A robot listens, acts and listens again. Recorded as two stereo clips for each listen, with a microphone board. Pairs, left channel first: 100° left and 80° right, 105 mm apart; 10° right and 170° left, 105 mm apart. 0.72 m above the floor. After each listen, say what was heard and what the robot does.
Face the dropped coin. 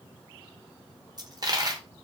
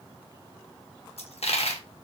The dropped coin: 25° right. Turn 25° right.
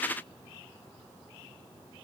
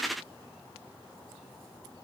I heard a dropped coin from this way, but can't make it out now.